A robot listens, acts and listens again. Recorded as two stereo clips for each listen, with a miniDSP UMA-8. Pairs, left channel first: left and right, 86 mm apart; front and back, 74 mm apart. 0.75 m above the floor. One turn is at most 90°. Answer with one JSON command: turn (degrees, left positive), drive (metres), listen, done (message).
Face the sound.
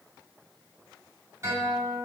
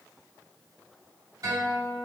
{"turn": -90}
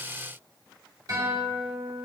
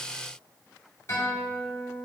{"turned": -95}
{"turn": -50}
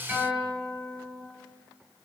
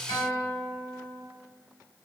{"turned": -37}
{"turn": -10}
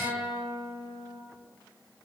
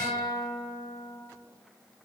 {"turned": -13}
{"done": "Facing the guitar, 1 to 2 m away."}